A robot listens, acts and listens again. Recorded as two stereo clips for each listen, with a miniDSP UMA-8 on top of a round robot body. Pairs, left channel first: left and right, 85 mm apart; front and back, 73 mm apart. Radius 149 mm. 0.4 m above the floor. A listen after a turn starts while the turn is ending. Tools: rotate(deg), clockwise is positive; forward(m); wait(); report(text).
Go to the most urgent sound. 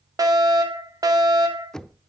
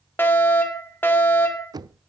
rotate(55)
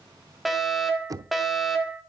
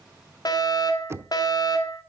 forward(1.0)
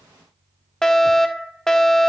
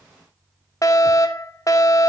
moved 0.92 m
rotate(-10)
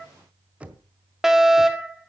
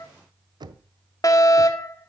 forward(1.0)
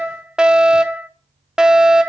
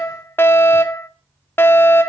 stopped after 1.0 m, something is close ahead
rotate(15)
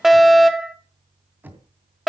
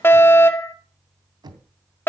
report("Arrived at the fire alarm, straight ahead.")